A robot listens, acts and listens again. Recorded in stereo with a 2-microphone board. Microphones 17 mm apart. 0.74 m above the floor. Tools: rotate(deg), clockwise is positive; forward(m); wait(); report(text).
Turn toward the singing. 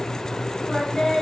rotate(-45)
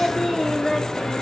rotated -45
rotate(-20)
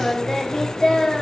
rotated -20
rotate(-35)
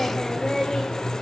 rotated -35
rotate(-20)
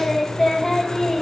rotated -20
rotate(-10)
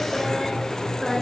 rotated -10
wait()
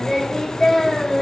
report("Found it: singing, straight ahead, 2 to 4 m away.")